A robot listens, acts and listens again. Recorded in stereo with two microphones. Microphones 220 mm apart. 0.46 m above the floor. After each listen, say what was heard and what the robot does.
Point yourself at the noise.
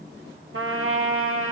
Turn 90° right.
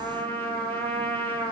So it is at 10° left. Turn 10° left.
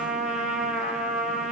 Found it: a trumpet, straight ahead.